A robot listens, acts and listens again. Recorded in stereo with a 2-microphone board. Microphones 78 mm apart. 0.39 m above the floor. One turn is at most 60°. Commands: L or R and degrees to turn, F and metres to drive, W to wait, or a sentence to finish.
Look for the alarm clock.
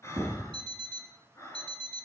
R60
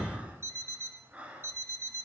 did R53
R35
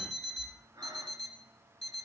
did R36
Found it: an alarm clock, straight ahead.